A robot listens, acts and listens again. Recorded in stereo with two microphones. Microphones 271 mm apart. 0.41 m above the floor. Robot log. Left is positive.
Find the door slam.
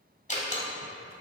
note: The door slam: about 25° left or 155° left.
cmd yaw +25
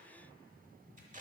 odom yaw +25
cmd idle
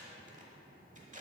end: I heard a door slam, but can't make it out now. It was about straight ahead or 130° left.